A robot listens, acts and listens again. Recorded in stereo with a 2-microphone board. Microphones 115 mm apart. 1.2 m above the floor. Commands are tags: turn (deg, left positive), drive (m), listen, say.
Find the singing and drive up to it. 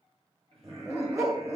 <turn deg="-60"/>
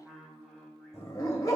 <drive m="1.0"/>
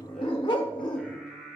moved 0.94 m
<drive m="1.0"/>
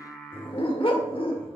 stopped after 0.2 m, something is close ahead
<say>Arrived at the singing, straight ahead.</say>